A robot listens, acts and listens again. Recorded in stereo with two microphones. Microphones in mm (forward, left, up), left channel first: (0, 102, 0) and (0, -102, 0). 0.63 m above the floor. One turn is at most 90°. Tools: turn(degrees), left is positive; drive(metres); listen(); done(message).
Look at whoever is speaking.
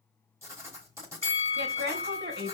turn(degrees=-55)
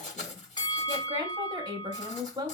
turn(degrees=-25)
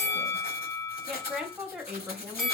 done("Facing the woman speaking, 1 to 2 m away.")